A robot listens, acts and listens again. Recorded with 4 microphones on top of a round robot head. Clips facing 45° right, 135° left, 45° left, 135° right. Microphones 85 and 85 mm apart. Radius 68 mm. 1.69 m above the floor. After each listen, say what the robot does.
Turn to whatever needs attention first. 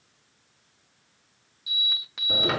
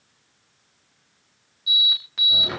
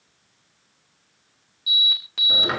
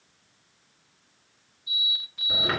Turn 40° left.
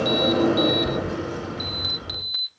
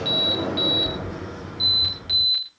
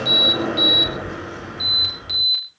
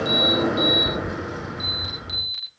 Turn 15° left.
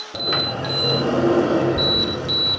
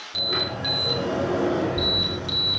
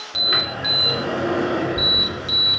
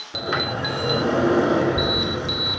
Found it: an alarm, straight ahead, over 4 m away.